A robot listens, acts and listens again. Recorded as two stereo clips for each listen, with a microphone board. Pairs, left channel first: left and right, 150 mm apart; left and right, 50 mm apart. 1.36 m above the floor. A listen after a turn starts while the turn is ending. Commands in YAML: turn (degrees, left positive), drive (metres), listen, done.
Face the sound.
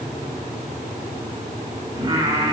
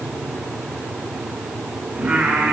turn: -35
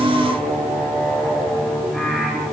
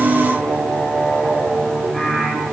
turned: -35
done: "Facing the singing."